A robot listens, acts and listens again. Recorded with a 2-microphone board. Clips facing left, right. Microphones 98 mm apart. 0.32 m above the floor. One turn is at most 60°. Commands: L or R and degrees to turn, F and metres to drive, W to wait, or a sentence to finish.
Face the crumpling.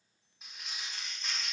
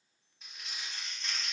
L30
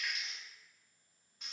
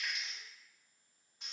R20
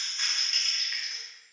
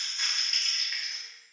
Facing the crumpling.